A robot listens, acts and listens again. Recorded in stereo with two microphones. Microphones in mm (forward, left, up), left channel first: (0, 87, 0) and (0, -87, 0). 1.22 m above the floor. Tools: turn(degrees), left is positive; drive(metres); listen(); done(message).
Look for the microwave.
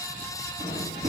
turn(degrees=-40)
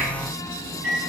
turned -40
turn(degrees=-100)
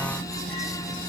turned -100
done("Facing the microwave, 1 to 2 m away.")